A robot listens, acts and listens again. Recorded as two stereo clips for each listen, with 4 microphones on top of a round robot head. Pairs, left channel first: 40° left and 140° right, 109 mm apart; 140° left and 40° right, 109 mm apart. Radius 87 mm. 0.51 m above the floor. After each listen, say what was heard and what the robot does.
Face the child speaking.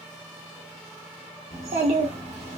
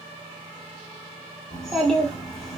The child speaking: 135° right. Turn 135° right.
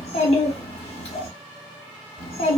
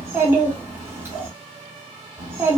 The child speaking is now 25° left. Turn 25° left.
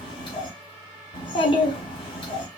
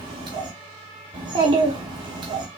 Facing the child speaking, 1 to 2 m away.